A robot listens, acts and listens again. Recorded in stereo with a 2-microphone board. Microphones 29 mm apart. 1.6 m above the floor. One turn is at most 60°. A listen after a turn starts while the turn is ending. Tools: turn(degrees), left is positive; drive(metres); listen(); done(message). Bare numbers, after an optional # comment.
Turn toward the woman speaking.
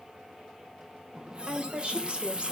# The woman speaking: about 35° right or 145° right.
turn(-35)
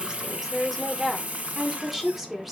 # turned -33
done("Found it: a woman speaking, straight ahead.")